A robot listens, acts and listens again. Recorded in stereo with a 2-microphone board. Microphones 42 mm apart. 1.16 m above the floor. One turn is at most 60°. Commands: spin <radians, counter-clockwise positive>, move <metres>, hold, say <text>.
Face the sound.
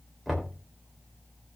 spin 0.52
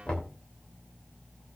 spin 1.05
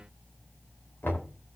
spin 1.05
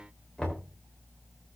spin 0.35
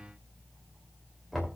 say Facing the knocking, 2 to 4 m away.